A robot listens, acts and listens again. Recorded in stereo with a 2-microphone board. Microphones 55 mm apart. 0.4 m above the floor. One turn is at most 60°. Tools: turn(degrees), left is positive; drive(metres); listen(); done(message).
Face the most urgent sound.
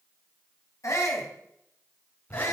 turn(degrees=60)
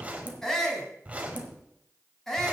turn(degrees=10)
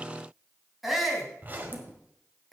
done("Found it: a shout, straight ahead, 2 to 4 m away.")